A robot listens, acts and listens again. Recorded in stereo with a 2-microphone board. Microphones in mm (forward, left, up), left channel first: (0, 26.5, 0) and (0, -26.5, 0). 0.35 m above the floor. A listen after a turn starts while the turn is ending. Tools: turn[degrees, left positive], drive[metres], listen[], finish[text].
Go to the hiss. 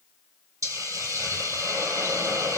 Action: turn[-90]
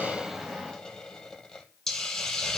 Thought: So it is at 10° left.
Action: turn[10]
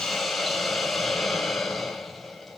Action: drive[1.0]
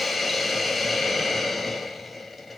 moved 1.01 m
Action: drive[1.0]
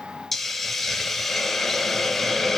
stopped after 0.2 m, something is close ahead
Action: finish[I am next to the hiss.]